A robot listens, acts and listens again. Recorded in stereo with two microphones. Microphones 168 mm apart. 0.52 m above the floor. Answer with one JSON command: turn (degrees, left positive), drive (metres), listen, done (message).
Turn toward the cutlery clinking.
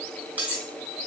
{"turn": -30}
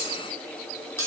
{"turn": 20}
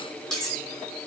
{"done": "Found it: cutlery clinking, straight ahead, 1 to 2 m away."}